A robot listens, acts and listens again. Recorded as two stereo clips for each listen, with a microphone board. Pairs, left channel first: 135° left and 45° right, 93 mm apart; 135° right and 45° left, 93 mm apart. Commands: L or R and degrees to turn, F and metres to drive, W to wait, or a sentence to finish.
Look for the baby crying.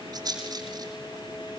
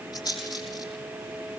W
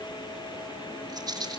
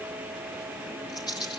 W
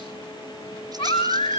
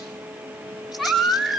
L135
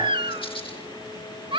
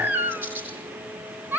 R20
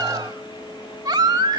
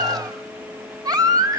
Facing the baby crying.